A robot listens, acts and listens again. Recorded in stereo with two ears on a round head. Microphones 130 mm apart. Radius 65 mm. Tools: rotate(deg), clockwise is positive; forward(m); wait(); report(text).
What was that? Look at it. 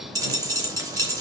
rotate(25)
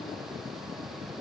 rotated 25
wait()
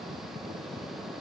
report("I heard a dropped coin, but can't make it out now. It was about straight ahead or 130° right.")